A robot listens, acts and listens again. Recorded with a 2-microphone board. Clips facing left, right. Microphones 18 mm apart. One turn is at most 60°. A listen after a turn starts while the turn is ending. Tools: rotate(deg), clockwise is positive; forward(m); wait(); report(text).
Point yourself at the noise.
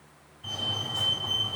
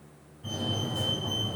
rotate(-35)
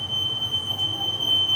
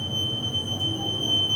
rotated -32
rotate(-60)
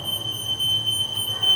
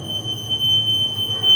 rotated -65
rotate(-45)
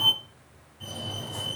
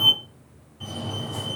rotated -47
report("Found it: a fire alarm, straight ahead.")